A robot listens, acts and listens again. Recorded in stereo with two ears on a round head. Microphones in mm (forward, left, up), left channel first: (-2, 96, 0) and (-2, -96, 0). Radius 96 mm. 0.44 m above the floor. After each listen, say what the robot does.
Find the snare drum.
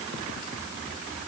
Keep listening.
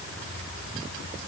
Keep listening.
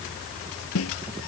Turn 75° left.
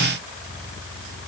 Keep listening.
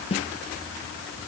Turn 30° left.
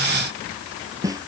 Turn 15° right.
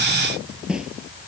Facing the snare drum.